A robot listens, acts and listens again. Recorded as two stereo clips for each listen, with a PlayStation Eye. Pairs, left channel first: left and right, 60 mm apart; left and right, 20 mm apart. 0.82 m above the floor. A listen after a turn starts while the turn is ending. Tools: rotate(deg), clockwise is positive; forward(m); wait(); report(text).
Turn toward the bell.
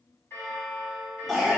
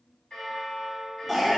rotate(-45)
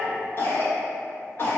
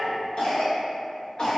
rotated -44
wait()
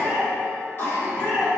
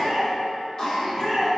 wait()
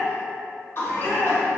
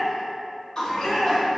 report("I heard a bell, but can't make it out now. It was about 5° left or 90° left.")